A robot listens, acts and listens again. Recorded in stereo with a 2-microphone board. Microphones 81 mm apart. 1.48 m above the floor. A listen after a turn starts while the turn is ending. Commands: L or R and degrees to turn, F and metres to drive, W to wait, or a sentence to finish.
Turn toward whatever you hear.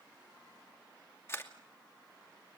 L30
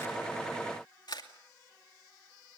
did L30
L120
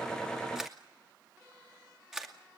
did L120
Facing the camera shutter.